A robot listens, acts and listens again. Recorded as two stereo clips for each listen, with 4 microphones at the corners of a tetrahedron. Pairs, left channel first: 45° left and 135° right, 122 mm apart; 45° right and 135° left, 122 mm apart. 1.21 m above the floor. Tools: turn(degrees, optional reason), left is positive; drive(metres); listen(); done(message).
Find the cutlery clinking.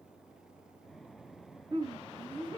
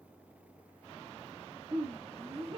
listen()
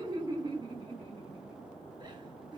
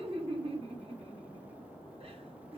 listen()
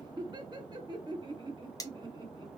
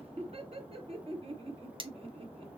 turn(degrees=100, reason="The cutlery clinking: 100° left.")
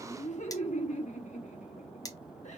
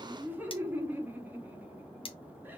turn(degrees=-10, reason="The cutlery clinking is now 10° right.")
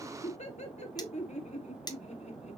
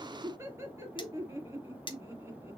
done("Facing the cutlery clinking.")